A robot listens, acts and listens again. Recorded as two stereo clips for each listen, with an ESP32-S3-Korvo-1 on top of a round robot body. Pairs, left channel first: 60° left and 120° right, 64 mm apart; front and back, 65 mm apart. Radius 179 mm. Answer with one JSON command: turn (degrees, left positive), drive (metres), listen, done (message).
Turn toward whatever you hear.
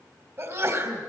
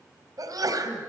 {"turn": -160}
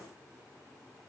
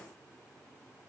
{"done": "Facing where the sneeze came from. I can't hear it now."}